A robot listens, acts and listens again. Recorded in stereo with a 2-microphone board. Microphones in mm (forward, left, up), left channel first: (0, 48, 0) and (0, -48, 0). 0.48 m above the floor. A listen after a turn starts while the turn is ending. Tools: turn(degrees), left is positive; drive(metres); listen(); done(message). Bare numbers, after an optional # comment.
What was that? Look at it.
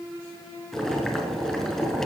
turn(30)
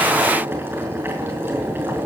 # So it is at 20° right.
turn(-20)
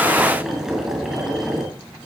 done("Facing the boiling.")